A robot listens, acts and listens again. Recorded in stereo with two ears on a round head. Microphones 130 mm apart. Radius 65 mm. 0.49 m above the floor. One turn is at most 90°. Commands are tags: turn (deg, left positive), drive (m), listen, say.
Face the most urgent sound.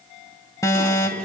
<turn deg="25"/>
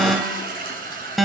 <say>Found it: an alarm, straight ahead.</say>